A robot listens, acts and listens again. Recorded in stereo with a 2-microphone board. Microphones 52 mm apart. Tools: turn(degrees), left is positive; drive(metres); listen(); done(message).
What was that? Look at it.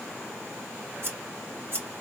turn(degrees=-45)
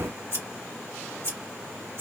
turn(degrees=-80)
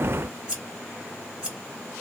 turn(degrees=-20)
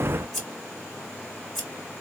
done("Facing the scissors, 2 to 4 m away.")